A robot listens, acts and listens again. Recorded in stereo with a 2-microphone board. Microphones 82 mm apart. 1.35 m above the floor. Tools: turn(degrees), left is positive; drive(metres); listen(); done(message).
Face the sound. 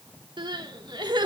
turn(degrees=-75)
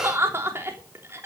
turn(degrees=-30)
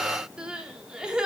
turn(degrees=-10)
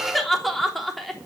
done("Facing the crying.")